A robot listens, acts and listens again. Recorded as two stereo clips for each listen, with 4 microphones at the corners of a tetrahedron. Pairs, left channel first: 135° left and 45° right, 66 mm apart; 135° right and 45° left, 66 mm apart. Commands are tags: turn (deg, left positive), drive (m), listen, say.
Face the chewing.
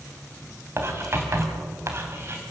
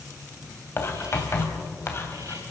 <listen/>
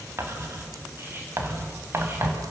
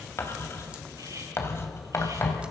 <listen/>
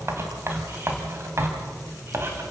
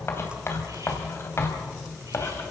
<say>I can't make out chewing, only writing.</say>